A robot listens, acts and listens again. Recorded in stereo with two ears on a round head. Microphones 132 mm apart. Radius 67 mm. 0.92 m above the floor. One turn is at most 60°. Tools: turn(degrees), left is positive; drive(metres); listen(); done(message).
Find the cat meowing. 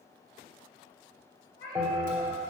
turn(degrees=30)
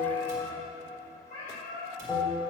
turn(degrees=60)
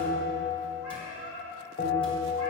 turn(degrees=40)
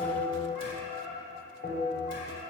done("Facing the cat meowing, over 4 m away.")